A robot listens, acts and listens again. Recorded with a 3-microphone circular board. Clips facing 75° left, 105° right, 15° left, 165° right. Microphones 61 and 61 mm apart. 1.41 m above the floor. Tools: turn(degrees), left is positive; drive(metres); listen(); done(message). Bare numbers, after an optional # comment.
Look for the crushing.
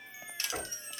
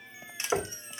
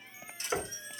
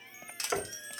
# The crushing: 175° right.
turn(-175)
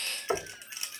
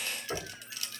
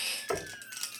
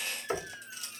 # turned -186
# The crushing is now 10° left.
turn(10)
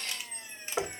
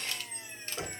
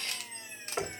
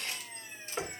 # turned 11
done("Facing the crushing, 1 to 2 m away.")